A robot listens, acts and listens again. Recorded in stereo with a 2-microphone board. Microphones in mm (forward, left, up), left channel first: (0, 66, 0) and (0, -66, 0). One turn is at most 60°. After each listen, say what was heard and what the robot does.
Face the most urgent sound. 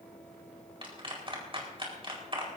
Keep listening.
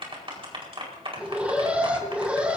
Turn 30° right.
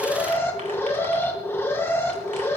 So it is at 20° left. Turn 20° left.
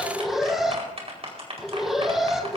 Facing the alarm, 2 to 4 m away.